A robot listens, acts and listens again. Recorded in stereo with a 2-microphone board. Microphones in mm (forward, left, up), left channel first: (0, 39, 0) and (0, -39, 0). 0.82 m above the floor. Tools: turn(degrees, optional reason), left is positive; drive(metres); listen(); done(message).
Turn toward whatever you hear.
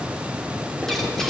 turn(degrees=30)
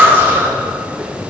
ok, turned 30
turn(degrees=-30, reason="So it is at 30° right.")
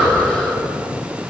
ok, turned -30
turn(degrees=10, reason="The breathing is now 10° left.")
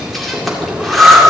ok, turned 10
done("Found it: breathing, straight ahead.")